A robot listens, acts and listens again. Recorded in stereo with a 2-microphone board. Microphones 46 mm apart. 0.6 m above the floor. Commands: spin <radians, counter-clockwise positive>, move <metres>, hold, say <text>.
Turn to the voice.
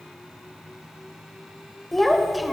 spin 0.52
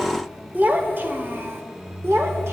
spin -1.13
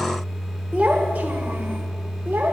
spin -0.79
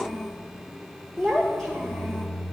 spin 0.17
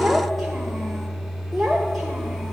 say Facing the child speaking, 1 to 2 m away.